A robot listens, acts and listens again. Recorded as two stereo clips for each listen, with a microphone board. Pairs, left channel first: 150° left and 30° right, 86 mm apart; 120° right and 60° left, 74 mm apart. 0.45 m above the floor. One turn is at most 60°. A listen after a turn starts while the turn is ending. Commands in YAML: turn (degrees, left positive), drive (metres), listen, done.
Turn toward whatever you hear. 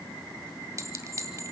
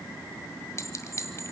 turn: -60
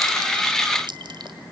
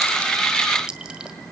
turn: -20
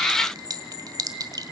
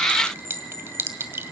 done: "Found it: a clink, straight ahead, 1 to 2 m away."